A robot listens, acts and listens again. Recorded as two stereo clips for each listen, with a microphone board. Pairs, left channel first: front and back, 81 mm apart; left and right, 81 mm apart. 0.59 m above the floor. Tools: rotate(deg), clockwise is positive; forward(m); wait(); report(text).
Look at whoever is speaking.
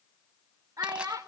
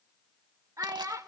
rotate(135)
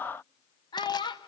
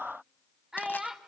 rotate(10)
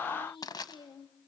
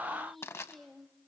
wait()
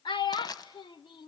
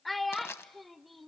report("Facing the child speaking, 1 to 2 m away.")